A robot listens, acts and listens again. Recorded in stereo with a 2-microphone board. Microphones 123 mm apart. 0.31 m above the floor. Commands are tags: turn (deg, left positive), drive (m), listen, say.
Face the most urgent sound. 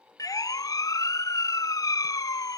<turn deg="30"/>
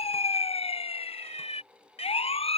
<turn deg="120"/>
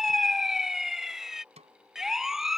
<say>Found it: a siren, straight ahead.</say>